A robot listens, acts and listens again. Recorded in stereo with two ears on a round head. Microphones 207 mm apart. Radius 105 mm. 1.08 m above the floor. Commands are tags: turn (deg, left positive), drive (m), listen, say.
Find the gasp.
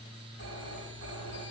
<listen/>
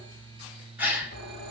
<turn deg="-30"/>
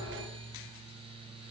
<listen/>
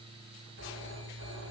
<say>I heard a gasp, but can't make it out now. It was about 20° left or 140° right.</say>